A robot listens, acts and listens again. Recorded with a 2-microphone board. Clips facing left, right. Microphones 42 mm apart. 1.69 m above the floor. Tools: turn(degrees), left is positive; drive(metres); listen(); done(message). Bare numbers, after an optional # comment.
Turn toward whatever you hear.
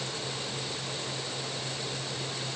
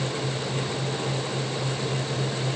listen()
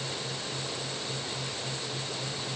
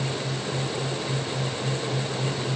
listen()
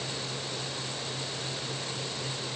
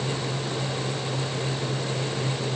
done("I can't make out anything.")